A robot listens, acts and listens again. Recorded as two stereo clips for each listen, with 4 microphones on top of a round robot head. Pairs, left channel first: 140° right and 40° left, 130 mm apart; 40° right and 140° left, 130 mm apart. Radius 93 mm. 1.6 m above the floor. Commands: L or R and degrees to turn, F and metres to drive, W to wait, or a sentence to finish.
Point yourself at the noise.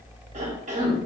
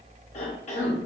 Facing the cough, under 1 m away.